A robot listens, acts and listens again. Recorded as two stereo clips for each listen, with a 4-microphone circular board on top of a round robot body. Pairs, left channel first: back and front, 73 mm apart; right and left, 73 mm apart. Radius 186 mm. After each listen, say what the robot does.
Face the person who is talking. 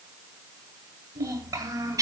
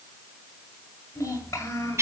Turn 40° right.
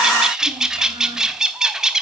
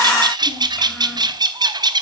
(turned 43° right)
Keep listening.
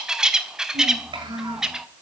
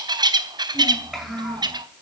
Found it: a child speaking, straight ahead.